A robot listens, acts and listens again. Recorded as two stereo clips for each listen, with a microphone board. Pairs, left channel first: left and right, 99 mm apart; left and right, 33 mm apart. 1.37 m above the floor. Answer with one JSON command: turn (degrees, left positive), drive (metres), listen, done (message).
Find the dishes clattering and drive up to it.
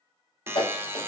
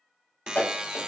{"turn": 65}
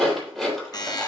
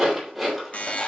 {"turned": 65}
{"drive": 1.0}
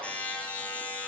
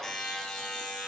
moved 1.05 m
{"listen": true}
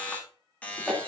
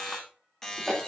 {"drive": 1.0}
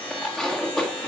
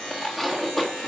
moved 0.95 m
{"drive": 1.0}
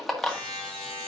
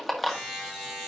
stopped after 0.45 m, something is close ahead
{"done": "I am next to the dishes clattering."}